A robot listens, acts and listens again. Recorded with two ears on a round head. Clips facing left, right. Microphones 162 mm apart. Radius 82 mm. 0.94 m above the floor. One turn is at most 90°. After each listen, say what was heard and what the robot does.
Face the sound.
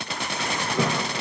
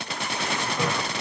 The toilet flushing: about 55° left or 125° left. Turn 55° left.
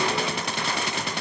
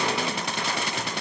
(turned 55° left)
Keep listening.
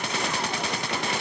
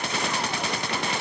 Keep listening.
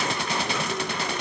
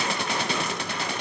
I heard a toilet flushing, but can't make it out now. It was about straight ahead or 70° left.